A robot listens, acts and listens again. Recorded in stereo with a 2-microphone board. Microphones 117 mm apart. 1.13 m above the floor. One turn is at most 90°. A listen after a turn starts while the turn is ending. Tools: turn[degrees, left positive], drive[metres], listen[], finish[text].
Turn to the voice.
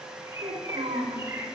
Thought: The child speaking: about 70° right or 110° right.
Action: turn[-70]
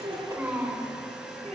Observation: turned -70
Thought: So it is at 25° right.
Action: turn[-25]
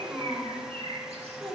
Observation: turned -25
Thought: The child speaking is now 15° right.
Action: turn[-15]
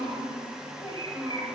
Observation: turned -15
Action: finish[Found it: a child speaking, straight ahead.]